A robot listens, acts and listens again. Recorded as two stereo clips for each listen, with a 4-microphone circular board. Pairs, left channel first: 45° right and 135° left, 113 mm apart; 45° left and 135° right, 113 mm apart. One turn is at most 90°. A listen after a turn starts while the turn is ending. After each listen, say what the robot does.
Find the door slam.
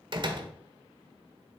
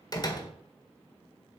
Turn 90° left.
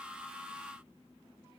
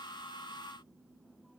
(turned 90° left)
I heard a door slam from this way, but can't make it out now.